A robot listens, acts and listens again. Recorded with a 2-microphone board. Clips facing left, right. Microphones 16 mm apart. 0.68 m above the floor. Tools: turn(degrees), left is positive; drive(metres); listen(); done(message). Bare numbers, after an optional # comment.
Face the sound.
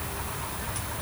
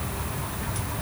listen()
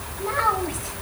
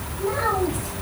# The child speaking: about 30° left or 150° left.
turn(30)
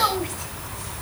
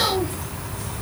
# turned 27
listen()
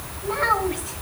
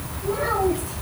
# So it is at 130° left.
turn(130)
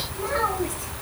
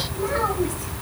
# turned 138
done("Found it: a child speaking, straight ahead.")